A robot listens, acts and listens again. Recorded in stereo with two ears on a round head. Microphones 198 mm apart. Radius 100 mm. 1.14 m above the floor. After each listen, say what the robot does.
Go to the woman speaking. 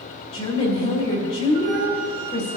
Turn 30° left.
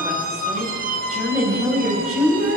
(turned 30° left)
Drive 1.0 m forward.
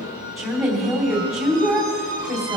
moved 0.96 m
Drive 1.0 m forward.
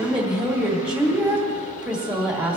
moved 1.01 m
Drive 1.0 m forward.
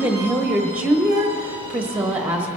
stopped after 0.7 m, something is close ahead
Arrived at the woman speaking, straight ahead.